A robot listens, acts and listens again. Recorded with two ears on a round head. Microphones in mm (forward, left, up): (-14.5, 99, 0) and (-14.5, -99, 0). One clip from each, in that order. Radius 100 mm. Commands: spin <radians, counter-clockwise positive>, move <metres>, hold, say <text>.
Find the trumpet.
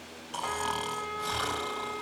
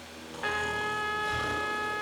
spin -0.70
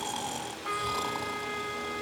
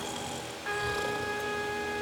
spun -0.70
say Found it: a trumpet, straight ahead.